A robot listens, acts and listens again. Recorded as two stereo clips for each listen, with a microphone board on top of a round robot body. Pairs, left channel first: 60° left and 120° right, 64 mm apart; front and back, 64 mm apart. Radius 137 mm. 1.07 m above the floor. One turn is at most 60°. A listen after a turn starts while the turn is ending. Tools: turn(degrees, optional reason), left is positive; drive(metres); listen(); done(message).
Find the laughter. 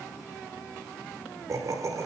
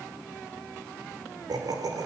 turn(degrees=-60, reason="The laughter: 155° right.")
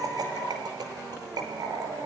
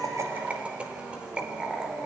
turn(degrees=-60, reason="The laughter is now 100° right.")
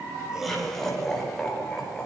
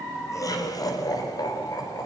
turn(degrees=-20, reason="The laughter is now 20° right.")
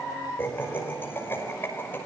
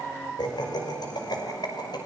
done("Facing the laughter, over 4 m away.")